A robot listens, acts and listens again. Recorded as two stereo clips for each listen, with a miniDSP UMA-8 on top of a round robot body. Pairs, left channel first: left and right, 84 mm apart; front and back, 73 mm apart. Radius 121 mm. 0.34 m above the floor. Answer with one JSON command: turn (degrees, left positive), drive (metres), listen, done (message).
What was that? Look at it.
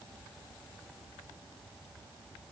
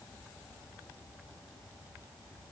{"listen": true}
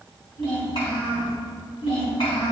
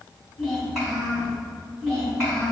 {"turn": 90}
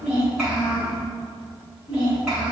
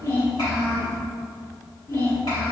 {"turn": -10}
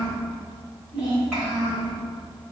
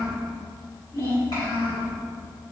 {"done": "Found it: a child speaking, straight ahead."}